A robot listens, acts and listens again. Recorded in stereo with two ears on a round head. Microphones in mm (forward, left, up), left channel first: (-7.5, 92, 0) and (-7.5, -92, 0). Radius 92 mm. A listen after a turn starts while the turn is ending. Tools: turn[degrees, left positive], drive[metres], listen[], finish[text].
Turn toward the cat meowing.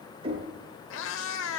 Thought: The cat meowing: about 70° left or 110° left.
Action: turn[70]
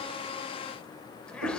Action: listen[]
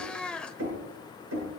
Action: finish[Facing the cat meowing, 1 to 2 m away.]